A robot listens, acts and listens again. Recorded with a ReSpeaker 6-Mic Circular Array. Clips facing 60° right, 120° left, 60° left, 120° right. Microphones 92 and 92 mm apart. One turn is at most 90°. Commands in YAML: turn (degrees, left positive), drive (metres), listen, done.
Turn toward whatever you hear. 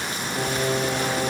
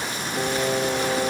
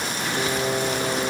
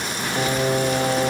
turn: -90
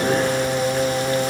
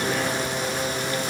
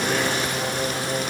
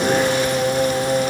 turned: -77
turn: -70
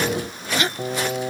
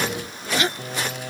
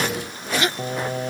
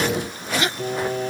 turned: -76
turn: 10
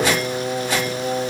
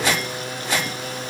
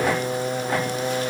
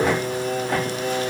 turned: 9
done: "Facing the singing."